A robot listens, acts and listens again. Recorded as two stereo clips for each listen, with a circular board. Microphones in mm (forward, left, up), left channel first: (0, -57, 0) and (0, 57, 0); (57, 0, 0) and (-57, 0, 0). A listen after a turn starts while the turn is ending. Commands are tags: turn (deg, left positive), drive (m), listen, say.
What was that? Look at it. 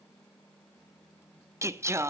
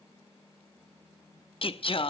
<turn deg="25"/>
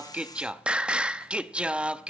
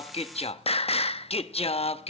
<turn deg="10"/>
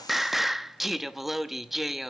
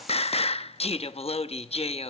<say>Found it: singing, straight ahead, under 1 m away.</say>